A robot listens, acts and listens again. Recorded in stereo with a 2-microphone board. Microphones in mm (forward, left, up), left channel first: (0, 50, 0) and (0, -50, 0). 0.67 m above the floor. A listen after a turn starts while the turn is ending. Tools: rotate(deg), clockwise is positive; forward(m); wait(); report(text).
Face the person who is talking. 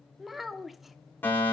rotate(-30)
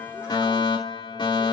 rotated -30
wait()
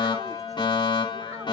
wait()
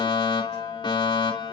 report("I heard a child speaking, but can't make it out now. It was about 30° right or 150° left.")